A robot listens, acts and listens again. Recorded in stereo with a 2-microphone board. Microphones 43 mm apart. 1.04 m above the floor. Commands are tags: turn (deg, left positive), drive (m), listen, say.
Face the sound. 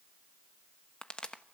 <turn deg="25"/>
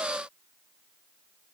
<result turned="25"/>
<listen/>
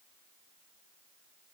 <say>I heard a pop, but can't make it out now. It was about straight ahead or 130° left.</say>